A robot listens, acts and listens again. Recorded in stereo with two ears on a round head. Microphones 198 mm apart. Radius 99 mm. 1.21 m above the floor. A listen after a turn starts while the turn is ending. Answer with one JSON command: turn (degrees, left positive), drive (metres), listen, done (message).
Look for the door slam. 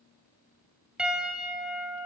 {"listen": true}
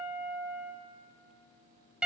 {"listen": true}
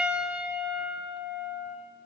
{"done": "I can't make out a door slam, only a piano."}